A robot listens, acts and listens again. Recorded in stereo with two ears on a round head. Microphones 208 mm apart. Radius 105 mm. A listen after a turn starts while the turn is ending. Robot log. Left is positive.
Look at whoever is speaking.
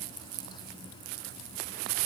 cmd idle
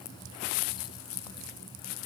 cmd idle
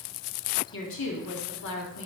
note: The woman speaking: about 60° left or 120° left.
cmd yaw +60
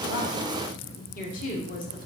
note: So it is at 40° left.
cmd yaw +40
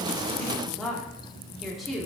end: Found it: a woman speaking, straight ahead, 1 to 2 m away.